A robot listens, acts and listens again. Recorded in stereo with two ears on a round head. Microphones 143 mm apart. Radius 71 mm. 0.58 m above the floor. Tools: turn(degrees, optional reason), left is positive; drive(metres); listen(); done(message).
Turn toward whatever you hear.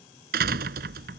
turn(degrees=-65, reason="The door slam: about 65° right or 115° right.")
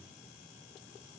listen()
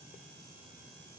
done("I heard a door slam, but can't make it out now. It was about straight ahead or 50° right.")